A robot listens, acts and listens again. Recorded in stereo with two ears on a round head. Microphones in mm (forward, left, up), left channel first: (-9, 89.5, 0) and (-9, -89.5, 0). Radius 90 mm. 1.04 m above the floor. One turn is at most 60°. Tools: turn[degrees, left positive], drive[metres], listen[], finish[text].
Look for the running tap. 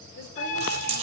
Thought: The running tap: about 35° right or 145° right.
Action: turn[-35]
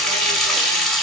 Action: finish[Found it: a running tap, straight ahead, 2 to 4 m away.]